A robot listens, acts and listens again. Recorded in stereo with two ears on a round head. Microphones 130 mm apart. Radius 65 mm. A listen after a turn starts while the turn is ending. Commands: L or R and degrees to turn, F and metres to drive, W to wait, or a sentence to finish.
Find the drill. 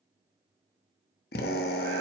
L70
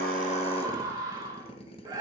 L35
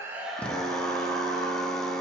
Found it: a drill, straight ahead, 1 to 2 m away.